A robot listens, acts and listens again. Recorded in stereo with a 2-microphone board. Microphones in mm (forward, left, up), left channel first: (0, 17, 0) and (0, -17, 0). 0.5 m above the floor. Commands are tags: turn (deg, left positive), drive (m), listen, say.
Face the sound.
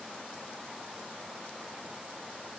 <listen/>
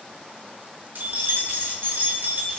<turn deg="-65"/>
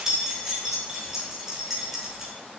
<turn deg="-15"/>
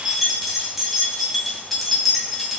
<say>Facing the keys jangling, 1 to 2 m away.</say>